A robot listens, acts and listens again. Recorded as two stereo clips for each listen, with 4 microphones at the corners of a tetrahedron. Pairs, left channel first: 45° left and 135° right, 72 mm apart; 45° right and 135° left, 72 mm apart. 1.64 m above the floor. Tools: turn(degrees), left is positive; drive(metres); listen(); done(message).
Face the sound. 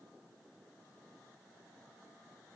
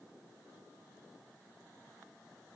listen()
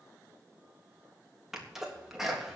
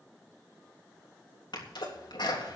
turn(degrees=-50)
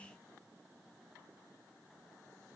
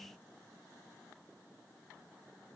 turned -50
done("Facing where the sneeze came from. I can't hear it now.")